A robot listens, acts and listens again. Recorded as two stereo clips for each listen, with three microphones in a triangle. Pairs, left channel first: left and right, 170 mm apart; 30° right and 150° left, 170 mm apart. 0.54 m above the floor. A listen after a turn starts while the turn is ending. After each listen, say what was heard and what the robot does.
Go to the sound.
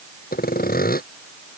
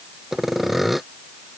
The sawing: 60° left. Turn 60° left.
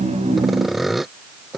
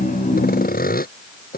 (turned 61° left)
Drive 1.0 m forward.
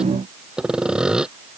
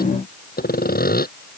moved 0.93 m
Drive 1.0 m forward.
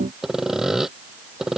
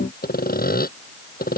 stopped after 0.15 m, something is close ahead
Blocked. The sawing is further on, straight ahead.